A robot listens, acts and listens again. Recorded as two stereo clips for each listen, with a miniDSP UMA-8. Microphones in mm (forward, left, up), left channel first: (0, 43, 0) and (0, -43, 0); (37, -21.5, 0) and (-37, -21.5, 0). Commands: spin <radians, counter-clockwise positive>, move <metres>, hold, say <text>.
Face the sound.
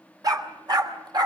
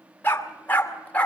spin -1.22
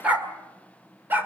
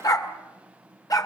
spin -0.52
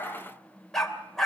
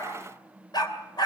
say Found it: a dog barking, straight ahead, 2 to 4 m away.